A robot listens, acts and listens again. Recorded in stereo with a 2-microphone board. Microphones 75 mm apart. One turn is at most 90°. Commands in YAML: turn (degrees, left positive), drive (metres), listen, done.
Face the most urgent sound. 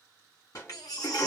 turn: 65
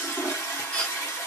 turn: 20
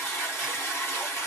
listen: true
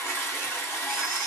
listen: true
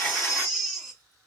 done: "Facing the baby crying."